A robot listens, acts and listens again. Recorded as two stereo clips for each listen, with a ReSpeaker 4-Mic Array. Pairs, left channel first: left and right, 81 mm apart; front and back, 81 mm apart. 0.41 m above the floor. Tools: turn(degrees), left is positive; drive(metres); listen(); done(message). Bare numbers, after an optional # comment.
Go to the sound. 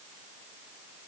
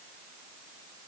listen()
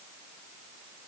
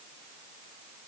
listen()
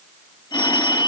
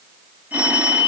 # The phone ringing: 115° left.
turn(115)
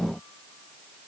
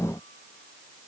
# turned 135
# Nothing new. It was at 20° right.
turn(-20)
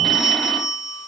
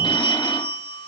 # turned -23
drive(1.0)
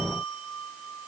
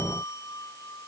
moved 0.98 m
listen()
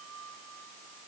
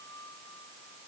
listen()
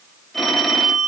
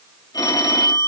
drive(1.0)
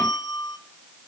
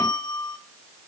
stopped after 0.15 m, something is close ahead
# The phone ringing is now 10° left.
turn(10)
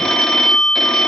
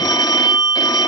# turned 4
done("Arrived at the phone ringing, straight ahead.")